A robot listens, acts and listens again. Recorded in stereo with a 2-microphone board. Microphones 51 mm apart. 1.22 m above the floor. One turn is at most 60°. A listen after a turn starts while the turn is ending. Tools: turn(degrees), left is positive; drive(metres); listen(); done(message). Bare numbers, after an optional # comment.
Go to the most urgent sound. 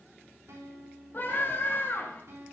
# The scream: about 45° left or 135° left.
turn(45)
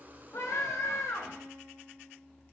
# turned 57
# So it is at 80° left.
turn(60)
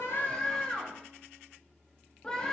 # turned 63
# The scream is now 15° left.
turn(15)
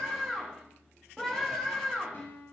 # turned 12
drive(1.0)
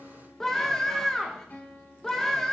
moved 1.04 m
# The scream is now 10° left.
turn(10)
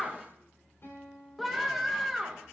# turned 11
drive(1.0)
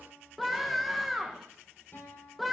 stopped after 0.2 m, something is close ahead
done("Arrived at the scream, straight ahead.")